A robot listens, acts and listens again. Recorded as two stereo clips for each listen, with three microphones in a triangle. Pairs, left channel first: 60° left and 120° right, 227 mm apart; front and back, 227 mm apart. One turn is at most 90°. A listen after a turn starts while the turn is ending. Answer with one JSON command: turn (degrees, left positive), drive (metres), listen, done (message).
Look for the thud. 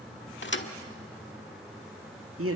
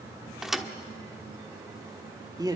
{"turn": 90}
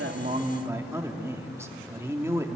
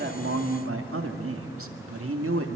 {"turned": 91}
{"done": "Facing where the thud came from. I can't hear it now."}